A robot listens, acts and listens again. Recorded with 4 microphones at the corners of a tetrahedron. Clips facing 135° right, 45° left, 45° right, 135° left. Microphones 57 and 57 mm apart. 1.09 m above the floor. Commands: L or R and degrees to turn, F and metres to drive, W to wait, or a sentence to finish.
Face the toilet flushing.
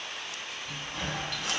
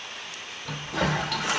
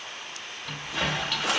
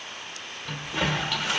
L45
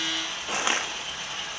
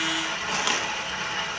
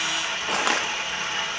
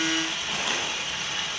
Found it: a toilet flushing, straight ahead.